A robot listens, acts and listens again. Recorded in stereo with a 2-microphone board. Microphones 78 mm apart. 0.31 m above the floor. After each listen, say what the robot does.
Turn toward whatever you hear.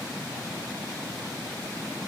Keep listening.
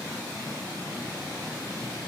Keep listening.
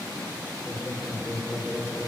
Turn 25° right.
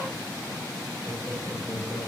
Turn 130° right.
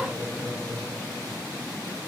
Turn 10° left.
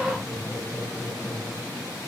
Facing the laughter, over 4 m away.